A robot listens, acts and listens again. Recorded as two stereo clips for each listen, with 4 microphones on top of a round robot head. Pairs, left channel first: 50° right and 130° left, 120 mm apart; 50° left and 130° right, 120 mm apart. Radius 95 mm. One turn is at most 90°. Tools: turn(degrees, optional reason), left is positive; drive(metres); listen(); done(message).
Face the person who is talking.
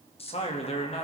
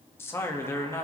turn(degrees=-15, reason="The man speaking: 15° right.")
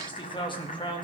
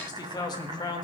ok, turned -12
done("Facing the man speaking.")